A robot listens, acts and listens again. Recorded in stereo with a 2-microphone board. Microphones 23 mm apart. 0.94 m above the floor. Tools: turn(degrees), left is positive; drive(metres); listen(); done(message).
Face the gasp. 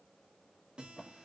listen()
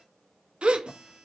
turn(degrees=-65)
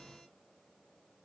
listen()
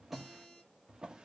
done("I heard a gasp, but can't make it out now. It was about straight ahead or 50° right.")